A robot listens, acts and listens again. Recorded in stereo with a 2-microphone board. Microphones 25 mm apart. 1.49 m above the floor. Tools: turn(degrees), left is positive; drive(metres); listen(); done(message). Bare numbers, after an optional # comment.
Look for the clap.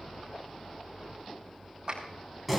# The clap: about 40° right or 140° right.
turn(-40)
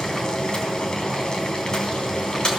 listen()
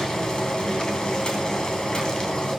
listen()
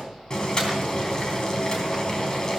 done("I heard a clap, but can't make it out now. It was about straight ahead or 100° right.")